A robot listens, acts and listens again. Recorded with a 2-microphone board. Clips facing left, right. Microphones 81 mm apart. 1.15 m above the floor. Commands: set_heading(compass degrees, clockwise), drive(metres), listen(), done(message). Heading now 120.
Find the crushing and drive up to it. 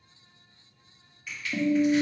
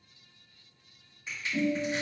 set_heading(145)
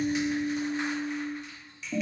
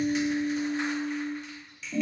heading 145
drive(1.0)
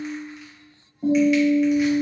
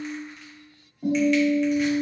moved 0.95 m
listen()
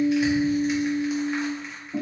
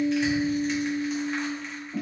listen()
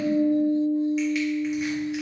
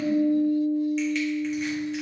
done("Facing where the crushing came from. I can't hear it now. I did not reach it.")